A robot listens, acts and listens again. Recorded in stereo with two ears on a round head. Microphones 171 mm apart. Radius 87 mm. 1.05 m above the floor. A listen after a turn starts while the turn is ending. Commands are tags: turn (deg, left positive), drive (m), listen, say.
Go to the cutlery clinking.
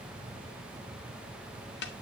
<listen/>
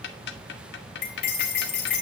<turn deg="55"/>
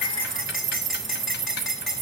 <drive m="1.0"/>
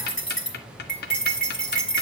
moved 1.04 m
<drive m="1.0"/>
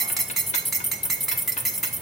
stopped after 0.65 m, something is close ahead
<say>Arrived at the cutlery clinking, straight ahead.</say>